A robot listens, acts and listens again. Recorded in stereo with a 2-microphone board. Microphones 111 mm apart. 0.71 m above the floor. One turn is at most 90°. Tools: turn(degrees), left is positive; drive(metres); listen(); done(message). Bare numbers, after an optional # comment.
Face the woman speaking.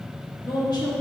# The woman speaking: about 45° left or 135° left.
turn(45)
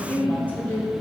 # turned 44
# So it is at 25° left.
turn(25)
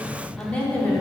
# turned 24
# The woman speaking is now 20° left.
turn(20)
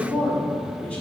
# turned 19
# The woman speaking is now 10° left.
turn(10)
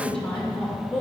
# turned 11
# The woman speaking is now 15° left.
turn(15)
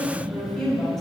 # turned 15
done("Facing the woman speaking.")